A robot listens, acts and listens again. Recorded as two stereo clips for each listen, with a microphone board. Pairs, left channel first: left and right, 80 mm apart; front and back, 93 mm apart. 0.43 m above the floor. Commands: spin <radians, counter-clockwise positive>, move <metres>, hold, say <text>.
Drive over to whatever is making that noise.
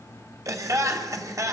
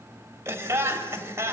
spin -2.18
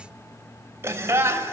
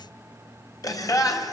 spin -0.70
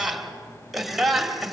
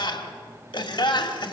move 1.0
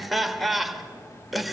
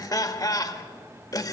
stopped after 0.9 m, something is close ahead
say I am next to the laughter.